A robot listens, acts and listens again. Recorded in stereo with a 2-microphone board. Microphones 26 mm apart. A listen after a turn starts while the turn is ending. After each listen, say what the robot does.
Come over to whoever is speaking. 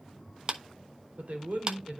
Turn 65° right.
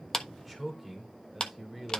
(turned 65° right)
Drive 1.0 m forward.
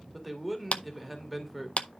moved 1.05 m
Drive 1.0 m forward.
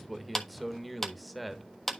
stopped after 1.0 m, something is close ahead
Arrived at the man speaking, straight ahead.